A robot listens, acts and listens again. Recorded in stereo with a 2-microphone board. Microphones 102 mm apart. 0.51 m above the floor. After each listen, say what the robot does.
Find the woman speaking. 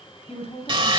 Turn 70° left.
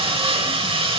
Keep listening.
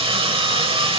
Keep listening.
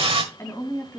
Turn 30° left.
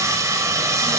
Keep listening.
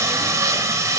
Keep listening.
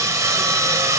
I heard a woman speaking from this way, but can't make it out now.